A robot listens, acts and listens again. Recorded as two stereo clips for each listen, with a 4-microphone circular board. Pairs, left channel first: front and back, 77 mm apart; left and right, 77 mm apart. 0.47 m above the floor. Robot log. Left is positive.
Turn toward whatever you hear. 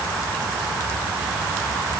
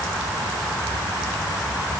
cmd idle
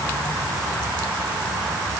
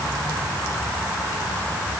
cmd idle
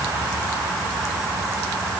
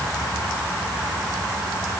end: I can't make out anything to turn to.